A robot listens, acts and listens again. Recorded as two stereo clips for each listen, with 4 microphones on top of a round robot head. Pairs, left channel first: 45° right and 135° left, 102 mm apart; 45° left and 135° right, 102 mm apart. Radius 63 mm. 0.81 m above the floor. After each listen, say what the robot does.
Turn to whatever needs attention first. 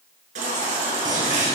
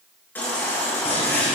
Turn 120° left.
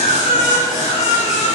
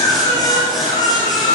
Turn 10° right.
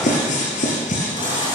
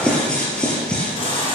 Facing the baby crying, over 4 m away.